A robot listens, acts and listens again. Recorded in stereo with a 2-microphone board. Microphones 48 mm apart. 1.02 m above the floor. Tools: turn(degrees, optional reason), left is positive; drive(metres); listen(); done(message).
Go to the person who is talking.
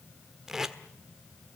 listen()
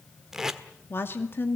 turn(degrees=50, reason="The woman speaking: about 50° left or 130° left.")
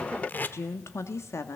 turn(degrees=75, reason="So it is at 75° left.")
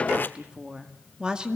turn(degrees=-20, reason="The woman speaking is now 20° right.")
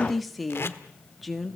drive(metres=1.0)
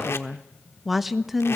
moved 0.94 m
drive(metres=1.0)
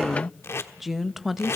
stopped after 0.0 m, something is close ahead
done("Arrived at the woman speaking, straight ahead.")